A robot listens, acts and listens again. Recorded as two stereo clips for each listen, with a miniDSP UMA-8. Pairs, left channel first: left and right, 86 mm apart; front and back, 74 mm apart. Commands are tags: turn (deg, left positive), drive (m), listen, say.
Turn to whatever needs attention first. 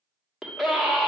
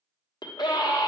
<say>Facing the scream, 1 to 2 m away.</say>